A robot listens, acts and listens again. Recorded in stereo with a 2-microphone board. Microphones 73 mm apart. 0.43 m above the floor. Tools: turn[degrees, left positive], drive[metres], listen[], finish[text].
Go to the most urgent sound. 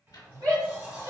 Thought: The shout: about 60° right or 120° right.
Action: turn[-60]
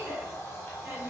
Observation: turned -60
Thought: So it is at 30° right.
Action: turn[-30]
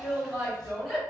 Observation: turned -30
Action: drive[1.0]
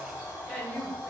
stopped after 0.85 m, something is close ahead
Action: finish[I am next to the shout.]